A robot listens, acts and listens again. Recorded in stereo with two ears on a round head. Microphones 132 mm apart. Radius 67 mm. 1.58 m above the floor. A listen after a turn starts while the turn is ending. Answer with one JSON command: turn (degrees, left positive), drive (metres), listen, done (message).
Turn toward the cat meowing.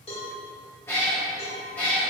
{"turn": 30}
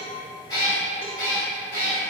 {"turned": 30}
{"turn": 20}
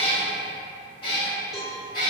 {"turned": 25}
{"turn": 145}
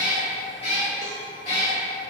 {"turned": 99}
{"turn": 45}
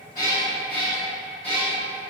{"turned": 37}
{"turn": 10}
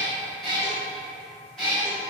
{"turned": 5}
{"done": "Facing the cat meowing."}